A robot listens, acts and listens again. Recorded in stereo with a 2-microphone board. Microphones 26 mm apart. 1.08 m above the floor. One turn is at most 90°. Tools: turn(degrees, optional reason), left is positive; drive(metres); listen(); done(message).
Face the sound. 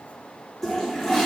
turn(degrees=30)
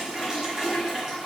turn(degrees=-20, reason="So it is at 20° right.")
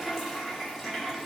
done("Facing the toilet flushing, 1 to 2 m away.")